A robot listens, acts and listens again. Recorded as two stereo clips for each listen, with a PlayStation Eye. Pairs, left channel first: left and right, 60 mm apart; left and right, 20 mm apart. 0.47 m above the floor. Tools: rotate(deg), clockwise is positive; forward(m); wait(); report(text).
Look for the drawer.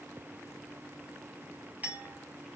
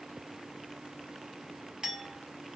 wait()
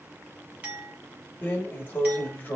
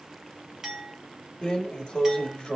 rotate(-30)
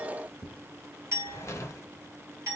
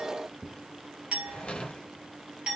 rotate(-115)
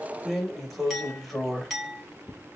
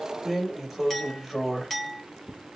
report("Facing the drawer.")